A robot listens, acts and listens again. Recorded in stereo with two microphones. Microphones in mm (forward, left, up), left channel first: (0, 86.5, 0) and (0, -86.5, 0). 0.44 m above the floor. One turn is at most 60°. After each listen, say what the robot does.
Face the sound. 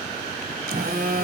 Turn 60° right.
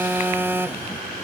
Turn 15° right.
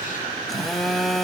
Found it: a phone buzzing, straight ahead.